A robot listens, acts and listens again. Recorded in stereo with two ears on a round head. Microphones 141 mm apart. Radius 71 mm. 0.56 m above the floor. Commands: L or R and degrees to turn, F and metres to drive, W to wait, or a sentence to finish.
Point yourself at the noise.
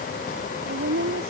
R65
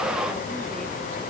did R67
W
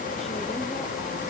W
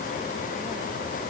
I heard a woman speaking, but can't make it out now. It was about straight ahead or 45° right.